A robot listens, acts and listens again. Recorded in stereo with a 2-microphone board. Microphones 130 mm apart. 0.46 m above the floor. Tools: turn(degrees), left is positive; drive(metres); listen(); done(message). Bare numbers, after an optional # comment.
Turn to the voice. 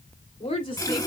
# The woman speaking: about 40° left or 140° left.
turn(40)
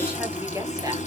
listen()
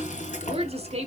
# So it is at 50° right.
turn(-50)
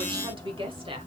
# The woman speaking is now 40° right.
turn(-40)
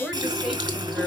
done("Found it: a woman speaking, straight ahead, 2 to 4 m away.")